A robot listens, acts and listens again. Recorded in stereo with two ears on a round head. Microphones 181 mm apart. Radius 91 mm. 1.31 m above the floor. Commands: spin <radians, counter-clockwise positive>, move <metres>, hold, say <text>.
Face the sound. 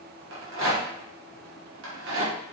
spin -1.22
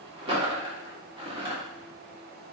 spin -0.52
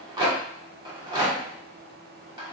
spin -0.44
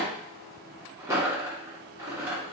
spin -0.26
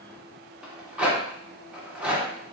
say Facing the rattle.